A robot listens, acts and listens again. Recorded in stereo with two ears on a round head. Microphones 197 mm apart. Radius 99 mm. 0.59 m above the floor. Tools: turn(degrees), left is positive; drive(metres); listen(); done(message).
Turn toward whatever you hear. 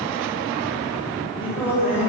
turn(degrees=-30)
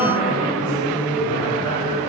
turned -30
turn(degrees=25)
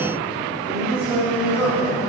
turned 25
turn(degrees=-10)
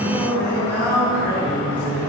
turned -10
turn(degrees=10)
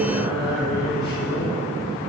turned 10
done("Found it: singing, straight ahead, over 4 m away.")